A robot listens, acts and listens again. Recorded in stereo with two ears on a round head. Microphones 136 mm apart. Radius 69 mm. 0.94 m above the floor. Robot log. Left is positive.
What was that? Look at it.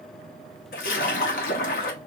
note: The splash: about 55° left or 125° left.
cmd yaw +55
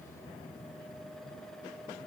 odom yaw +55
cmd idle
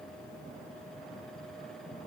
end: I heard a splash, but can't make it out now. It was about straight ahead or 70° left.